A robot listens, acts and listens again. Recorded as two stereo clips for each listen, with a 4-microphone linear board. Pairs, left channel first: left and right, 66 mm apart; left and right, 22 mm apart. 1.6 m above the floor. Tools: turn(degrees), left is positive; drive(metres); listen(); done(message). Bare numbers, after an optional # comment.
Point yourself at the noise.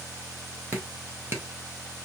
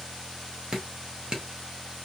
# The dripping: about 30° right or 150° right.
turn(-30)
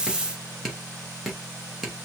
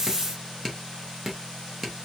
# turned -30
done("Found it: dripping, straight ahead, 2 to 4 m away.")